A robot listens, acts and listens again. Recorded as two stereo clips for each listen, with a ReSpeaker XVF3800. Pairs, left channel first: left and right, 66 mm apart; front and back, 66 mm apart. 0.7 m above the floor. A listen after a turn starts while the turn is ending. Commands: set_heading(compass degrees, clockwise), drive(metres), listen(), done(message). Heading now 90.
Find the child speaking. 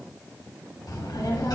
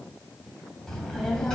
set_heading(10)
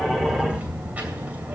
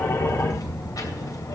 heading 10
set_heading(35)
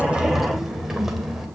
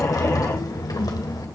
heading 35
done("Found it: a child speaking, straight ahead, 2 to 4 m away.")